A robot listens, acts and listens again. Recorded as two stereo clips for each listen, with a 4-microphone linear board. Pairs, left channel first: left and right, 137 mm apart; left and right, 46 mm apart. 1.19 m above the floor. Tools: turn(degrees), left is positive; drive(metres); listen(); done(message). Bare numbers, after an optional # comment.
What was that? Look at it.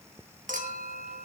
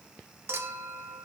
# The clink: about 70° right or 110° right.
turn(-70)
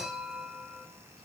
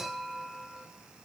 done("Found it: a clink, straight ahead.")